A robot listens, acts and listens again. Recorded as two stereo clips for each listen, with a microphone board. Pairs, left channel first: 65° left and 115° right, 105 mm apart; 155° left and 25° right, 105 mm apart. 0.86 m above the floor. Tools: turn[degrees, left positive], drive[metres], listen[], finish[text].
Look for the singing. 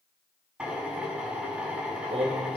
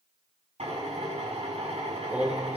Thought: The singing: 100° right.
Action: turn[-100]
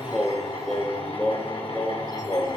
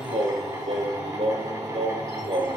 Action: finish[Facing the singing.]